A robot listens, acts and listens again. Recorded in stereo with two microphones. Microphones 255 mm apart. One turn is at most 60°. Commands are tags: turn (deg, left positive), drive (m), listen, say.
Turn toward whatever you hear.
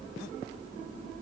<listen/>
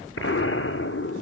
<turn deg="55"/>
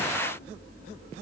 <listen/>
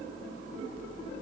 <say>I heard an explosion, but can't make it out now. It was about straight ahead or 70° left.</say>